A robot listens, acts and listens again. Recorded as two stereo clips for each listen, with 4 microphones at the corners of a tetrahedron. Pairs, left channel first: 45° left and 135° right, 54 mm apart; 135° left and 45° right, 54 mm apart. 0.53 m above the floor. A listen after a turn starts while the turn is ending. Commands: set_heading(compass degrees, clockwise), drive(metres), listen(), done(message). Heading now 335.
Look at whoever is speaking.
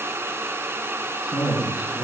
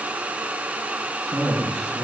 set_heading(40)
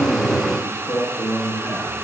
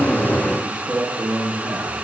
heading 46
set_heading(36)
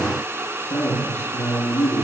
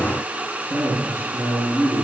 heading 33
done("Found it: a man speaking, straight ahead, over 4 m away.")